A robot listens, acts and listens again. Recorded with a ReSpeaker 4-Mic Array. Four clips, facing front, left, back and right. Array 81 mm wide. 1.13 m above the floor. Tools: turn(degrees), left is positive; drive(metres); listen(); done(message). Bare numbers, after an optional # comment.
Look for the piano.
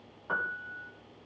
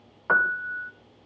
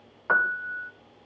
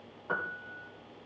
# The piano: 125° left.
turn(125)
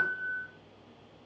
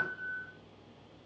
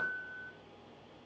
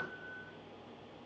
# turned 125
# The piano is now 35° left.
turn(35)
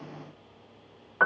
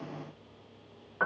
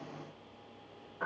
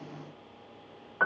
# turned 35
done("Found it: a piano, straight ahead.")